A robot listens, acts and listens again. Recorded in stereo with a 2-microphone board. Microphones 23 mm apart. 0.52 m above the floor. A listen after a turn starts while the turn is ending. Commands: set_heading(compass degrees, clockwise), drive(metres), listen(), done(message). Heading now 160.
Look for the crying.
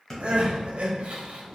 set_heading(225)
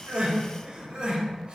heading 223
set_heading(273)
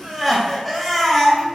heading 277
done("Facing the crying.")